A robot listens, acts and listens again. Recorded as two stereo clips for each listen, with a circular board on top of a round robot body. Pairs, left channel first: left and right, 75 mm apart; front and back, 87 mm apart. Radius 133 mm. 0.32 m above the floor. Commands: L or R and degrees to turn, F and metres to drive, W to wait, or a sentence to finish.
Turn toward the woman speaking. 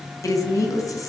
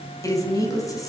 L50
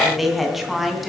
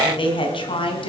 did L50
Facing the woman speaking, 2 to 4 m away.